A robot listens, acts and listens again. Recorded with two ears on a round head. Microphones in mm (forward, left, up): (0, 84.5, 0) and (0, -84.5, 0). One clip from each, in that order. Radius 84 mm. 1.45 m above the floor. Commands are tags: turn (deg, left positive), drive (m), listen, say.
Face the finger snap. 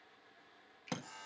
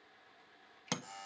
<turn deg="20"/>
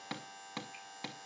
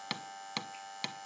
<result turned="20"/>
<listen/>
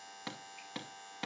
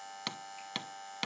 <listen/>
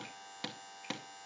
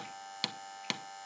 <say>I heard a finger snap, but can't make it out now. It was about straight ahead or 140° left.</say>